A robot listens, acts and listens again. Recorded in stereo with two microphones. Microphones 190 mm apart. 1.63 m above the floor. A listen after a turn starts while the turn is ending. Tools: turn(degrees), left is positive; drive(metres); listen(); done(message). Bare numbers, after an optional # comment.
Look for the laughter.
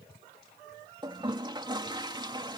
listen()
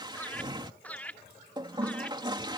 turn(30)
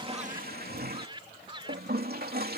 # So it is at 25° right.
turn(-25)
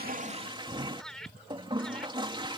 done("Facing the laughter.")